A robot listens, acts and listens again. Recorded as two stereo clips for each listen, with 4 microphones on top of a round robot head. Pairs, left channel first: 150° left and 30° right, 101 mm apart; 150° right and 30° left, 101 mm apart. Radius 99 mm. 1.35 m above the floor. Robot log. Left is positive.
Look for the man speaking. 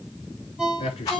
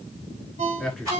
note: The man speaking: 120° left.
cmd yaw +120
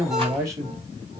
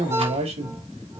note: The man speaking is now 30° left.
cmd yaw +30
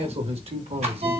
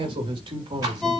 note: The man speaking is now 15° right.
cmd yaw -15
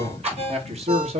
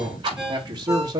note: The man speaking is now 25° right.
cmd yaw -25
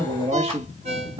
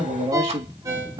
end: Facing the man speaking.